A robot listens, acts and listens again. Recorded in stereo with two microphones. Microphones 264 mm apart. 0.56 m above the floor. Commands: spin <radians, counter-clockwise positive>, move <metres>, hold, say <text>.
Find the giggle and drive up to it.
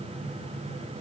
hold
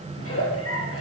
spin 1.05
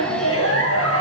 spin 1.05
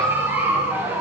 spin -0.17
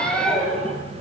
move 1.0
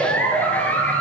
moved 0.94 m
move 1.0
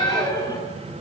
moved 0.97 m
spin 0.26
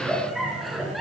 move 1.0
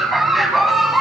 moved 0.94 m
move 1.0
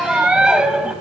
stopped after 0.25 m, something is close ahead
say Arrived at the giggle, straight ahead.